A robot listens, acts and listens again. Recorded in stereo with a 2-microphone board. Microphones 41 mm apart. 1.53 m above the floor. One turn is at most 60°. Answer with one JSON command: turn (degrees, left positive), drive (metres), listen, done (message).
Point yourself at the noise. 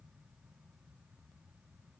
{"listen": true}
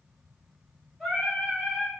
{"turn": 15}
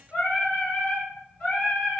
{"turn": 60}
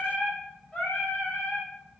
{"turn": 30}
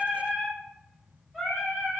{"done": "Found it: singing, straight ahead."}